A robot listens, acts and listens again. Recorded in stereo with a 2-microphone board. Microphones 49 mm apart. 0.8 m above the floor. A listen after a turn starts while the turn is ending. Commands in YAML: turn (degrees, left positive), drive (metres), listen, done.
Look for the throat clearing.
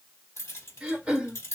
turn: -25
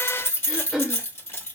done: "Facing the throat clearing."